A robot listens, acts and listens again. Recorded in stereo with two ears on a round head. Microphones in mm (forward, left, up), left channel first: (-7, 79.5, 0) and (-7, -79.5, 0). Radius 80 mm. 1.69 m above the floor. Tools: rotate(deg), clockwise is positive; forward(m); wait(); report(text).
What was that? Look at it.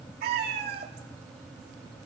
rotate(65)
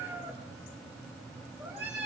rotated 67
rotate(15)
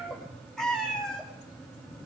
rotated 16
report("Facing the cat meowing, 2 to 4 m away.")